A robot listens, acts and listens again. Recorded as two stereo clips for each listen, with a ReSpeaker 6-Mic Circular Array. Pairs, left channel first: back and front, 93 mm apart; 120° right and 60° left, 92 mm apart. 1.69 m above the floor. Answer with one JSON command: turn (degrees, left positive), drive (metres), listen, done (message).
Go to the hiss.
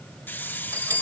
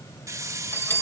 {"turn": 110}
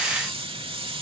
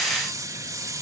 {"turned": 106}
{"drive": 1.0}
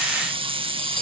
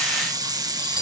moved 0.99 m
{"turn": 15}
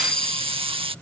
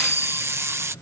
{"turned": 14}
{"drive": 1.0}
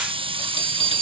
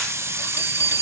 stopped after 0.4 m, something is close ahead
{"done": "I am next to the hiss."}